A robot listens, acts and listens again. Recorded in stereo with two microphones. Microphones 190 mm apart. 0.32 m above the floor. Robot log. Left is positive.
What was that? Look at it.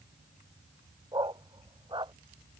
note: The dog barking: about 25° right or 155° right.
cmd yaw -25
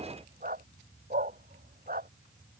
note: So it is at 130° right.
cmd yaw -130
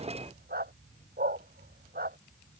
note: The dog barking is now 55° right.
cmd yaw -55
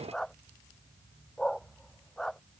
end: Found it: a dog barking, straight ahead.